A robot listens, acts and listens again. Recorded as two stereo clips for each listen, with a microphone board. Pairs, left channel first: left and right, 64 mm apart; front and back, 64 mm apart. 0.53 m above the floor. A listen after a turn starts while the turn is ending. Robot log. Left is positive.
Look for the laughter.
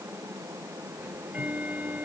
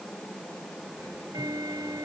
cmd idle
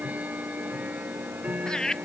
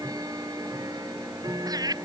note: The laughter: 170° left.
cmd yaw +170
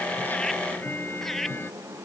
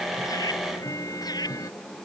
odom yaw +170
cmd idle
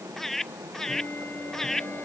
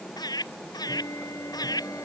end: Facing the laughter.